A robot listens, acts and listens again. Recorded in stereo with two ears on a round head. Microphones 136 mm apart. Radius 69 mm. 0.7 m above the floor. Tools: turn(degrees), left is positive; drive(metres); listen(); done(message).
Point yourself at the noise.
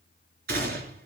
turn(degrees=-70)
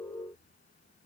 listen()
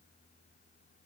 done("I heard a gunshot, but can't make it out now. It was about straight ahead or 40° right.")